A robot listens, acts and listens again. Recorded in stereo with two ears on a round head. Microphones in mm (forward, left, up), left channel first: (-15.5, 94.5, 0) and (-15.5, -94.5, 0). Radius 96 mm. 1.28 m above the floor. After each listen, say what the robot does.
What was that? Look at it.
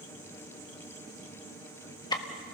Turn 20° left.
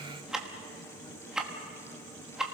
Found it: ticking, straight ahead, 1 to 2 m away.